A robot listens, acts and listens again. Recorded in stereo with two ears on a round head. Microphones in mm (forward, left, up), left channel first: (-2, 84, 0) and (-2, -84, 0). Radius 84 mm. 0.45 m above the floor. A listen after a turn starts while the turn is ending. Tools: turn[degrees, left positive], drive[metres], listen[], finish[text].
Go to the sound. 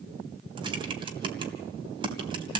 Thought: The typing on a keyboard: about 25° right or 155° right.
Action: turn[-25]
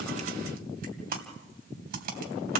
Thought: So it is at 125° right.
Action: turn[-125]
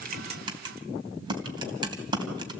Thought: The typing on a keyboard is now 25° right.
Action: turn[-25]
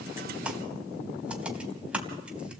Action: drive[1.0]
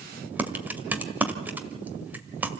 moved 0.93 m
Thought: The typing on a keyboard is now 10° right.
Action: turn[-10]
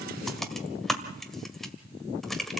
Action: drive[1.0]
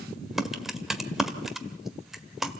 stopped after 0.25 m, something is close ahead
Action: finish[I am next to the typing on a keyboard.]